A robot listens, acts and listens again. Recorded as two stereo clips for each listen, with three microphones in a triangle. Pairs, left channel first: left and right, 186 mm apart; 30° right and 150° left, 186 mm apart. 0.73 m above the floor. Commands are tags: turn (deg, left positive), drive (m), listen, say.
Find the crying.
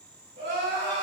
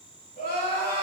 <turn deg="-70"/>
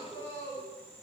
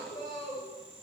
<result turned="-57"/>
<turn deg="-15"/>
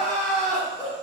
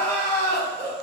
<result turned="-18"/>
<say>Facing the crying, 1 to 2 m away.</say>